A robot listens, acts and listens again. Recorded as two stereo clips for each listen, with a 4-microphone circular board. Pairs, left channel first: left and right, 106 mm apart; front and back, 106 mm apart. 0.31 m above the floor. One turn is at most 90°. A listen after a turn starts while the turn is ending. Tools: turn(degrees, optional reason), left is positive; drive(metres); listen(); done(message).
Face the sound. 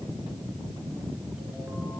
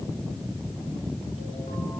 listen()
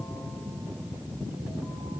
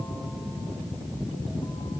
listen()
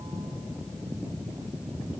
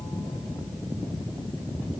done("I can't make out anything.")